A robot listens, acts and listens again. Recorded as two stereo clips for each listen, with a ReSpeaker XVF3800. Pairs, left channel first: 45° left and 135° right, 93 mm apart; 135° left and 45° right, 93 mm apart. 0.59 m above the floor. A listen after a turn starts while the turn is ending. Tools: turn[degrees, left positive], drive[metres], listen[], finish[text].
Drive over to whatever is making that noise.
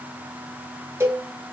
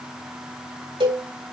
Thought: The cowbell: 75° right.
Action: turn[-75]
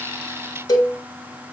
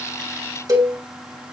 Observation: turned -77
Action: drive[1.0]
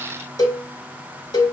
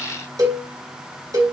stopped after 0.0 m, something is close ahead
Action: finish[Something is in my way. I am facing the cowbell but have not reached it.]